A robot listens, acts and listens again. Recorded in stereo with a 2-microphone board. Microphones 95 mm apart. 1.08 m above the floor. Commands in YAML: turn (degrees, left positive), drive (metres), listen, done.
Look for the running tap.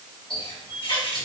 turn: 70
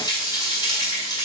turn: 45
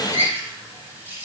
turn: -20
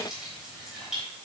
done: "Found it: a running tap, straight ahead, 2 to 4 m away."